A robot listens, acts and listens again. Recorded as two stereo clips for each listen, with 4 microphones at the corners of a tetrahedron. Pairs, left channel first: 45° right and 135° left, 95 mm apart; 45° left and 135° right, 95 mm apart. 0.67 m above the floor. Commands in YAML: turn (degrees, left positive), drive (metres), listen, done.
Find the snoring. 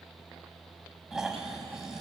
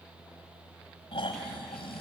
turn: 50
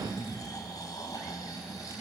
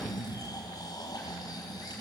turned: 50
done: "Found it: snoring, straight ahead, 2 to 4 m away."